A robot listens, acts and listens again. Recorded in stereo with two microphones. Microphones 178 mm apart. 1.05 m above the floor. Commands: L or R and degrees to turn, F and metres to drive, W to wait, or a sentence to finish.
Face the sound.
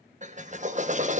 R45
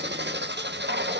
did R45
R90
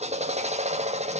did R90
R40
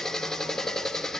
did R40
Facing the drill, 1 to 2 m away.